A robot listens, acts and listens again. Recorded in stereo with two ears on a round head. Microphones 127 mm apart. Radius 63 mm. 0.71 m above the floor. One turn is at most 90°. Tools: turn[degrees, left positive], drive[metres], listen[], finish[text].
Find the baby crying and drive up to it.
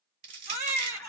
Thought: The baby crying: about 20° right or 160° right.
Action: turn[-20]
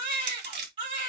Thought: So it is at 135° right.
Action: turn[-90]
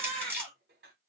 Thought: The baby crying is now 45° right.
Action: turn[-45]
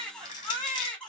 Action: drive[1.0]
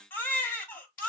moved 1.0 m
Thought: The baby crying is now 15° left.
Action: turn[15]
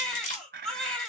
Action: drive[1.0]
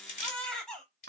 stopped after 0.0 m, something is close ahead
Action: finish[I am next to the baby crying.]